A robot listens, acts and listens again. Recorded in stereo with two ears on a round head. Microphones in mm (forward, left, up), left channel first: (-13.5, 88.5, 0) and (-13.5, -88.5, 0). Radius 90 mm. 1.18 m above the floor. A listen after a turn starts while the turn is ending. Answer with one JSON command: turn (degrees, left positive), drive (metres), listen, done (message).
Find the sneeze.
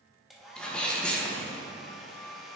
{"turn": 30}
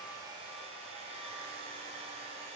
{"listen": true}
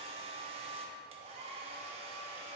{"done": "I heard a sneeze, but can't make it out now. It was about 25° right or 145° left."}